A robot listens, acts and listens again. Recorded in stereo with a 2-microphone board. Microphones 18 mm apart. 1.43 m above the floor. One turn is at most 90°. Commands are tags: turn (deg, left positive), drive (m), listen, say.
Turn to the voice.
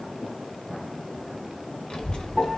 <turn deg="65"/>
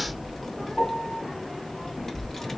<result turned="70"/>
<turn deg="25"/>
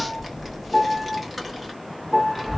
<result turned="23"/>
<say>Facing the child speaking.</say>